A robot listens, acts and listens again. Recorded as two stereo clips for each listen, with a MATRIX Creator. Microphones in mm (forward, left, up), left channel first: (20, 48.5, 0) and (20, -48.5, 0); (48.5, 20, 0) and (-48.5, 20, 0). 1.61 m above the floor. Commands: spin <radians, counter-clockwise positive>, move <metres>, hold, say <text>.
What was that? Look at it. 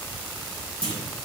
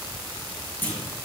spin -1.22
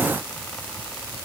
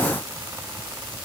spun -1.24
say Facing where the clunk came from. I can't hear it now.